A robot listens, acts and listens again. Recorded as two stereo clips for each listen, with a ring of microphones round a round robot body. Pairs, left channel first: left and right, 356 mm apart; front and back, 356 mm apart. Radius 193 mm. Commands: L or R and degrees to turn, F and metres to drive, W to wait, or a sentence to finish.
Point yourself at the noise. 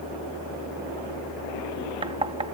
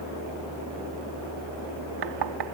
R165
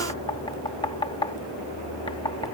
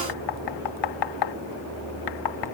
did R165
L15
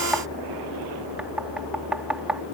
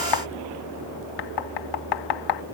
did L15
Facing the knocking.